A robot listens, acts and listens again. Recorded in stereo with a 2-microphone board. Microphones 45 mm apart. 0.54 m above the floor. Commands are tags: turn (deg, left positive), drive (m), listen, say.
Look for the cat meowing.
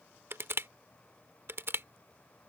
<listen/>
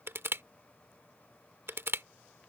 <listen/>
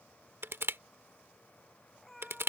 <turn deg="30"/>
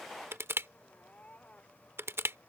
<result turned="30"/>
<turn deg="150"/>
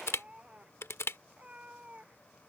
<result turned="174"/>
<turn deg="-25"/>
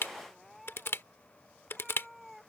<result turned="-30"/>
<say>Facing the cat meowing.</say>